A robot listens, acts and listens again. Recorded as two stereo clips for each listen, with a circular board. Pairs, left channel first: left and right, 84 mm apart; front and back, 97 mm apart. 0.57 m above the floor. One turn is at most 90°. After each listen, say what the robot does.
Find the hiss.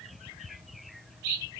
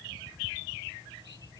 Keep listening.
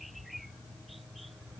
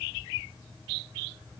Keep listening.
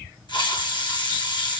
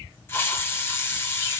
Turn 65° left.
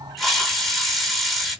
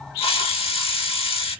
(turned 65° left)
Found it: a hiss, straight ahead, under 1 m away.